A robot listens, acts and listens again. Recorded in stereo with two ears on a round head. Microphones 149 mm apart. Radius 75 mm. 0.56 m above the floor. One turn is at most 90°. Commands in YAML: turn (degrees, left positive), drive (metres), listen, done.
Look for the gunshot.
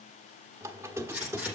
turn: -30
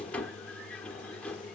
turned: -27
listen: true
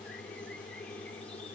done: "I heard a gunshot, but can't make it out now. It was about 15° left or 145° right."